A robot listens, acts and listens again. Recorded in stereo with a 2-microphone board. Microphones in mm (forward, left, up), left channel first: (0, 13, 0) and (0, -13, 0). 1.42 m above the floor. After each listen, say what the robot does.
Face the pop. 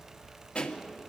Turn 55° left.
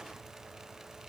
Keep listening.
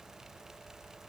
I heard a pop, but can't make it out now. It was about straight ahead or 70° left.